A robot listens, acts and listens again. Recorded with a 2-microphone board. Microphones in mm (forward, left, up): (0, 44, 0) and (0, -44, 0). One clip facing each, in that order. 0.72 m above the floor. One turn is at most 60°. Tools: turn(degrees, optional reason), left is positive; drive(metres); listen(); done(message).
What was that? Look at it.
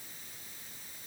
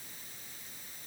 listen()
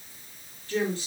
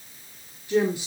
turn(degrees=-30)
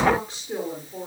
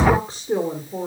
turn(degrees=-60, reason="So it is at 150° right.")
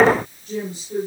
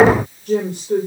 turn(degrees=-60, reason="The woman speaking is now 105° right.")
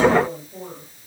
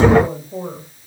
turn(degrees=-55, reason="The woman speaking is now 55° right.")
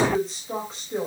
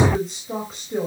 done("Found it: a woman speaking, straight ahead.")